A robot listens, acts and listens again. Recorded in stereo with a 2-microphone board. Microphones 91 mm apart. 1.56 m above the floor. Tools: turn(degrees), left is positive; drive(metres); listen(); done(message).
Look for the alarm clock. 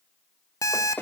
turn(degrees=40)
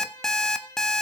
done("Found it: an alarm clock, straight ahead.")